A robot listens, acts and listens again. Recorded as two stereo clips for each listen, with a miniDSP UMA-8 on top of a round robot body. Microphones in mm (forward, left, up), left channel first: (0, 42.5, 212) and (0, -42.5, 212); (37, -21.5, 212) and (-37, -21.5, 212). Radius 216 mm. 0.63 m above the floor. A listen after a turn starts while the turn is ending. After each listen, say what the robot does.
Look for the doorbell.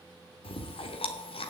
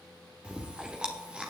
Keep listening.
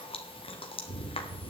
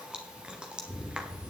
Keep listening.
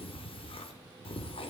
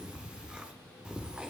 I can't make out a doorbell, only chewing.